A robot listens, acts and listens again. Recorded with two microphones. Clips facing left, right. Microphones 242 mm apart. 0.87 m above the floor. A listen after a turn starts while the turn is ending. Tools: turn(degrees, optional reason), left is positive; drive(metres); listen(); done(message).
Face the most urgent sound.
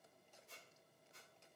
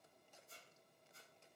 listen()
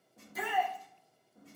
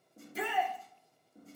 turn(degrees=-30, reason="The shout: about 30° right or 150° right.")
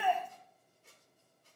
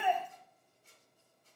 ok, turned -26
listen()
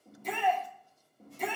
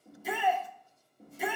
done("Facing the shout, 1 to 2 m away.")